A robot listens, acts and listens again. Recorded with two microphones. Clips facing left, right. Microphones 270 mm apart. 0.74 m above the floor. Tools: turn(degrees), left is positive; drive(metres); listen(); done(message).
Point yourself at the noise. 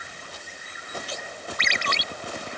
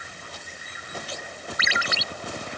turn(degrees=-30)
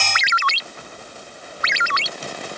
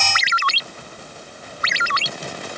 turn(degrees=-145)
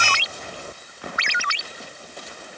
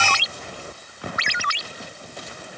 turn(degrees=-40)
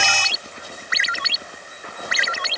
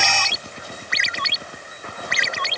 done("Found it: a ringtone, straight ahead.")